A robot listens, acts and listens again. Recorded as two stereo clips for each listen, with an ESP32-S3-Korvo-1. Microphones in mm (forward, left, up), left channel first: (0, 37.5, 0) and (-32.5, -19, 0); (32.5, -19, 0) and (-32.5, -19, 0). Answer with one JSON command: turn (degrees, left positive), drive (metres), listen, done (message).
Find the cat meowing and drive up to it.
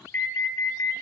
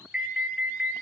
{"listen": true}
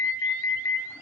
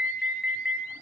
{"listen": true}
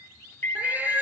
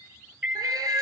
{"turn": 175}
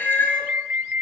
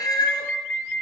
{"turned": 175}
{"drive": 1.0}
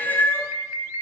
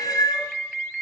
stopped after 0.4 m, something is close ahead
{"done": "Blocked. The cat meowing is further on, straight ahead."}